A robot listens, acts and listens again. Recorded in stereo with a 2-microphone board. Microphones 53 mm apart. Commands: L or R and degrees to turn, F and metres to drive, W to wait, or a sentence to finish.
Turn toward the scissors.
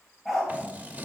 R30
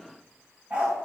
W
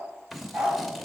Found it: scissors, straight ahead, under 1 m away.